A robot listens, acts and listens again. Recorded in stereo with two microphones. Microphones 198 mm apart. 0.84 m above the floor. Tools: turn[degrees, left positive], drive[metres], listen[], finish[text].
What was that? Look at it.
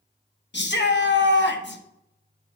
Thought: The shout: about 65° left or 115° left.
Action: turn[65]
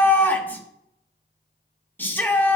Thought: So it is at 10° left.
Action: turn[10]
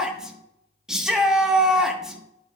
Action: finish[Found it: a shout, straight ahead.]